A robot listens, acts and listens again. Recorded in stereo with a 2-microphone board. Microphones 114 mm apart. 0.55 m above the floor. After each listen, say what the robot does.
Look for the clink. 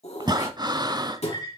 Turn 45° left.
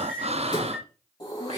Facing the clink, over 4 m away.